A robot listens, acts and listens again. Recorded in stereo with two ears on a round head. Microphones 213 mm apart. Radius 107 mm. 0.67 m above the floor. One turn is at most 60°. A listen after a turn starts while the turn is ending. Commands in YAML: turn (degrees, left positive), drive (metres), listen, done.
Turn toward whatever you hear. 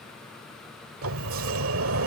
turn: -60
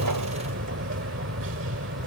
turn: -55
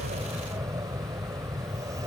turn: -15
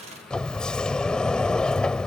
done: "Facing the sliding door."